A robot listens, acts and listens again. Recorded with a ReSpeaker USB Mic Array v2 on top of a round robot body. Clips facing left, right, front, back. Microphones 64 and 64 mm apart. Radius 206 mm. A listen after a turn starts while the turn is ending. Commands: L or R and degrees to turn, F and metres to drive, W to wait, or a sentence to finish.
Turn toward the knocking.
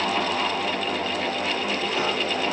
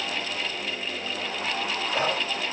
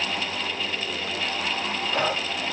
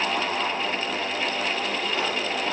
W
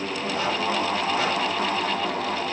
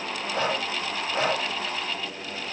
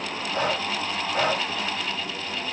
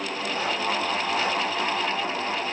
W
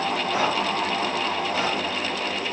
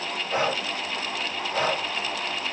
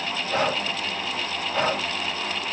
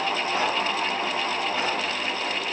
I can't make out knocking, only breathing.